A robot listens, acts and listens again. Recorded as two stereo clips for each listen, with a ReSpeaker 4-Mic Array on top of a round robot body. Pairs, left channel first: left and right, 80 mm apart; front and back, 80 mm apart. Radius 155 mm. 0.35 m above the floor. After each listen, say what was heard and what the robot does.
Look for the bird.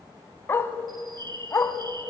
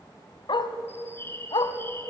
The bird: 60° right. Turn 60° right.
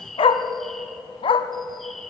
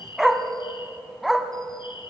Found it: a bird, straight ahead, 1 to 2 m away.